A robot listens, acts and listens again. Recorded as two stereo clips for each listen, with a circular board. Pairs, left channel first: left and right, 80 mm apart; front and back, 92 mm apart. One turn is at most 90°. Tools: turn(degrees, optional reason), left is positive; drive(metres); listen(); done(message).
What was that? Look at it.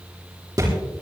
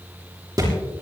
turn(degrees=-90, reason="The thud: 130° right.")
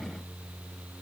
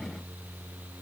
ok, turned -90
turn(degrees=-40, reason="Nothing new. It was at 40° right.")
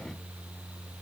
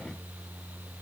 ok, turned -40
done("I heard a thud from this way, but can't make it out now.")